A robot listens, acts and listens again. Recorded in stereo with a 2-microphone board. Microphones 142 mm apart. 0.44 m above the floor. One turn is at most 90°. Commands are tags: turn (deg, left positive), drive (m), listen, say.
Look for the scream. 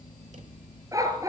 <listen/>
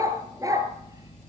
<listen/>
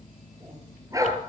<say>I can't make out a scream, only a dog barking.</say>